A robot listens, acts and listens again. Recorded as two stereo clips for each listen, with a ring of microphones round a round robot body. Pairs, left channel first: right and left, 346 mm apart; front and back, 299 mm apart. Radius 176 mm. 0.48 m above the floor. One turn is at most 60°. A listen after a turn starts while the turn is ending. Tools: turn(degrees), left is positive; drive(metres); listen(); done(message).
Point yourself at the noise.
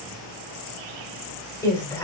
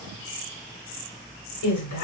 turn(degrees=-10)
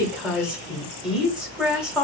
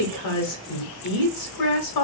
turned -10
done("Found it: a woman speaking, straight ahead.")